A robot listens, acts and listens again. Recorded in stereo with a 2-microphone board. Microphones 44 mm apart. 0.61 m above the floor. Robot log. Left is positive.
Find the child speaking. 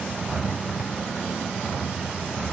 cmd idle
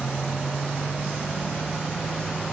cmd idle
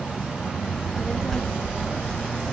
cmd yaw +30
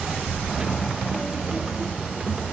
note: So it is at 20° right.
cmd yaw -20
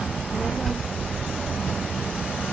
end: Facing the child speaking, under 1 m away.